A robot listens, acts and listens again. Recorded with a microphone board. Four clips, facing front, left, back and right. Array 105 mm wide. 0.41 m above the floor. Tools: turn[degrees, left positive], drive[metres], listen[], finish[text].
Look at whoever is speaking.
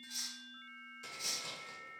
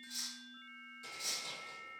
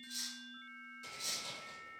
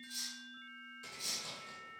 Action: listen[]
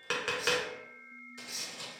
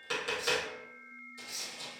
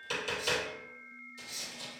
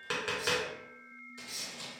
Action: listen[]
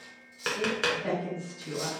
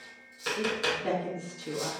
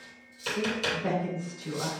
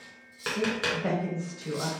Thought: The woman speaking: 120° right.
Action: turn[-120]
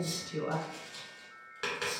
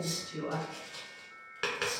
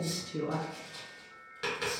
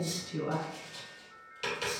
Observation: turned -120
Thought: The woman speaking is now 20° right.
Action: turn[-20]
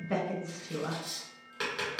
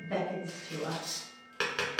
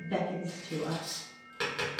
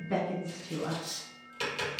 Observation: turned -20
Thought: The woman speaking is now 10° right.
Action: turn[-10]
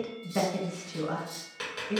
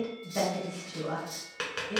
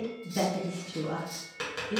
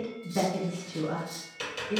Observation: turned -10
Action: finish[Facing the woman speaking.]